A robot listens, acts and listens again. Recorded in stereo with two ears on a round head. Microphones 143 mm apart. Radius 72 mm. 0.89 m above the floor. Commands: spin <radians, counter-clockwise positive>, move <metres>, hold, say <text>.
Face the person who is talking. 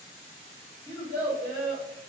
spin 0.26
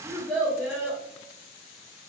say Facing the child speaking, 1 to 2 m away.